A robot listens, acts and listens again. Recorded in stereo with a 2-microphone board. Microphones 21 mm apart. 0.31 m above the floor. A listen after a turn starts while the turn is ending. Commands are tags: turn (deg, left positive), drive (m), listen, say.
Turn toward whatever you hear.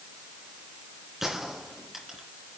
<turn deg="-30"/>
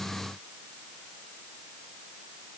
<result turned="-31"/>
<listen/>
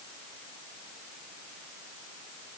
<say>I heard a gunshot, but can't make it out now. It was about 20° left or 135° right.</say>